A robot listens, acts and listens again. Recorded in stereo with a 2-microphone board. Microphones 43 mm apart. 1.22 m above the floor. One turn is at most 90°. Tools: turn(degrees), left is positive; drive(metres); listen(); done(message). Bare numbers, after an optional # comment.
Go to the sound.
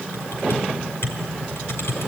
# The typing on a keyboard: about 70° left or 110° left.
turn(70)
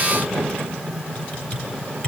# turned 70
# So it is at 40° left.
turn(40)
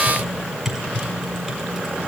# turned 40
drive(1.0)
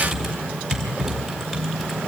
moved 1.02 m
drive(1.0)
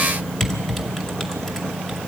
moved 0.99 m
# The typing on a keyboard is now 10° left.
turn(10)
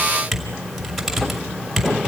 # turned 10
drive(1.0)
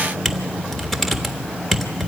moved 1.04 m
drive(1.0)
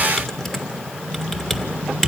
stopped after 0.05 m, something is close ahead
# The typing on a keyboard is now 10° left.
turn(10)
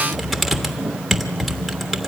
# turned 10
done("I am next to the typing on a keyboard.")